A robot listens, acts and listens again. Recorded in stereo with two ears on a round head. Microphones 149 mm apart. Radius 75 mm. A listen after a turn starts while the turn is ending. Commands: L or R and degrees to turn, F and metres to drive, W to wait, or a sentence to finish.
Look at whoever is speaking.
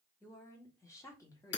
L20
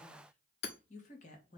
L130
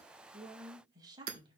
R30
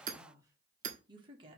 R30
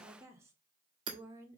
R15
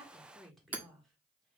Facing the woman speaking.